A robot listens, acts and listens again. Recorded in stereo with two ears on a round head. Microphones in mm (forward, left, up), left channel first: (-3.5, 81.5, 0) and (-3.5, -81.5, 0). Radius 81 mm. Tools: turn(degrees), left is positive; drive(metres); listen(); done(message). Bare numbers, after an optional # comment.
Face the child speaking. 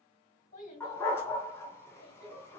# The child speaking: about 50° left or 130° left.
turn(50)
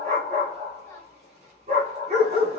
listen()
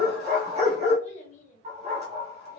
# So it is at 45° left.
turn(45)
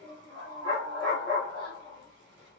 # The child speaking is now 25° left.
turn(25)
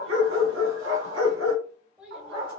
done("Found it: a child speaking, straight ahead, 1 to 2 m away.")